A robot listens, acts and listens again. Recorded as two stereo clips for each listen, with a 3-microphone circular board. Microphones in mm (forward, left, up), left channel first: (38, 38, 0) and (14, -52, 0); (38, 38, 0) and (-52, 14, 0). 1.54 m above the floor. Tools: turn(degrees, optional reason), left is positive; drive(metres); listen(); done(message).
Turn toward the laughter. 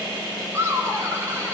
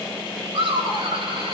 turn(degrees=-170, reason="The laughter: 170° right.")
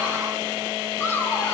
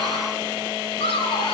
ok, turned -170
turn(degrees=10, reason="The laughter is now 10° left.")
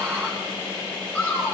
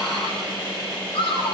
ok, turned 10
done("Facing the laughter, over 4 m away.")